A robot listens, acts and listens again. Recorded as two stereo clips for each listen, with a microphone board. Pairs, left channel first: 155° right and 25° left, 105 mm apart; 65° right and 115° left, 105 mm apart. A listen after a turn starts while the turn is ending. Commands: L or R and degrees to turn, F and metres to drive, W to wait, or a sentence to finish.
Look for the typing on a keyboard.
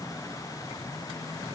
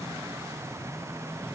W
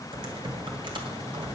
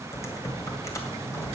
R10
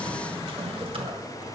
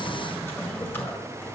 Facing the typing on a keyboard, 1 to 2 m away.